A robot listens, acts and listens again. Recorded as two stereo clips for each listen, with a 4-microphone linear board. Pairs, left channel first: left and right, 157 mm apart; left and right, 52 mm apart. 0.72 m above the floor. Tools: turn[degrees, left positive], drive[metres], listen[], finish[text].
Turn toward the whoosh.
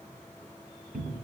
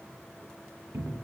Action: listen[]
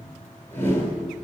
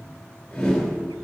Thought: The whoosh: about 15° left or 165° left.
Action: turn[15]
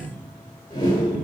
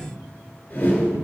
Thought: So it is at 150° left.
Action: turn[150]
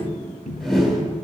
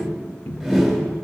Action: finish[Facing the whoosh, 2 to 4 m away.]